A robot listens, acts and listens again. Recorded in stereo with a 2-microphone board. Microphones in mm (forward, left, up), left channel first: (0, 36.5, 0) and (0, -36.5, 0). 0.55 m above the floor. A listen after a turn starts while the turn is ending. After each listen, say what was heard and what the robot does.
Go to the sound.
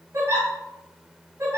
The giggle: about 50° right or 130° right. Turn 50° right.
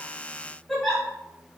Drive 1.0 m forward.
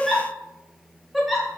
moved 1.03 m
Drive 1.0 m forward.
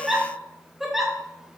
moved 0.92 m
Drive 1.0 m forward.
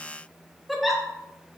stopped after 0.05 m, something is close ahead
Arrived at the giggle, straight ahead.